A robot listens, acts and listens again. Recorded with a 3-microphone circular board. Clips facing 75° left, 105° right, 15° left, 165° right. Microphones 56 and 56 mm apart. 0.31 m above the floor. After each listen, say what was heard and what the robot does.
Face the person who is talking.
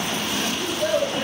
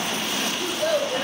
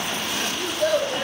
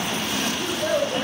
Found it: a child speaking, straight ahead.